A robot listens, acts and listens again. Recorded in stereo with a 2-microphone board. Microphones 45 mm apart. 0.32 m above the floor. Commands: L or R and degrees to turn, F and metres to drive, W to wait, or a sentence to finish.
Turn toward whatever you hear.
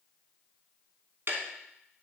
R50
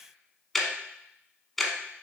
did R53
Facing the ticking.